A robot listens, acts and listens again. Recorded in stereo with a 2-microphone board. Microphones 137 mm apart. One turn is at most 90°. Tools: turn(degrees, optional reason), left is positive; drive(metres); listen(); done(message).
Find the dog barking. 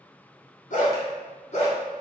turn(degrees=55, reason="The dog barking: about 55° left or 125° left.")
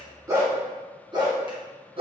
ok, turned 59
turn(degrees=-40, reason="So it is at 40° right.")
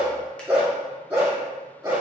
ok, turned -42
turn(degrees=-20, reason="The dog barking is now 20° right.")
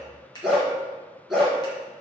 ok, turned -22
done("Facing the dog barking.")